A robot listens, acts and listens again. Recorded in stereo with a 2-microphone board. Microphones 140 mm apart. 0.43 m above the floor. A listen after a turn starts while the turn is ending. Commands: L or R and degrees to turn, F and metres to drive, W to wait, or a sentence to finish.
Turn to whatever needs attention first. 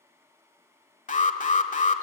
L60
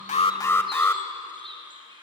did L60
L20
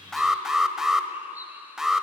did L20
Facing the alarm, 1 to 2 m away.